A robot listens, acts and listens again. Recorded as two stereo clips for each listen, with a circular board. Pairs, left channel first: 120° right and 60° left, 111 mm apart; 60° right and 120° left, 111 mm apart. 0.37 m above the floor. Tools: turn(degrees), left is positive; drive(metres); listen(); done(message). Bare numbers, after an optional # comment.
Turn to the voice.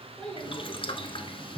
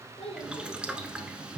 # The child speaking: 35° right.
turn(-35)
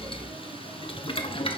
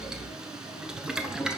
listen()
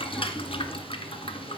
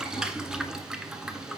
listen()
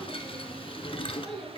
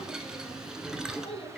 # The child speaking is now 35° right.
turn(-35)
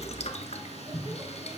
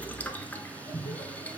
listen()
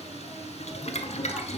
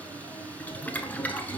listen()
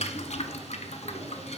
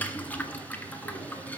done("Facing where the child speaking came from. I can't hear it now.")